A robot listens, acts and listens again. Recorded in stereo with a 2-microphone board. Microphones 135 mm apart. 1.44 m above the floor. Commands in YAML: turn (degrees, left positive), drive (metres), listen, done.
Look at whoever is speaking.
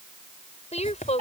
turn: 50
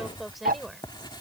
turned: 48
done: "Found it: a woman speaking, straight ahead."